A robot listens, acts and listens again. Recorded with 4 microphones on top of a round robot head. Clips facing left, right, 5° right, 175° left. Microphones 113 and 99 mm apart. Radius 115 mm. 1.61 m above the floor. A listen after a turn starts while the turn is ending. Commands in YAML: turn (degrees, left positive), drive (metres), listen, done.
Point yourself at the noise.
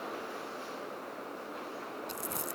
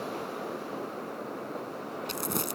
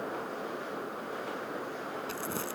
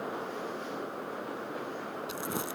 turn: -110
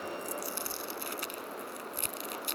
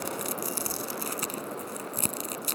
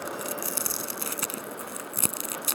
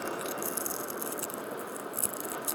turn: -35
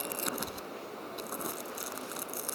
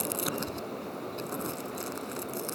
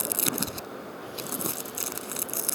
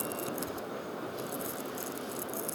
done: "Found it: crumpling, straight ahead."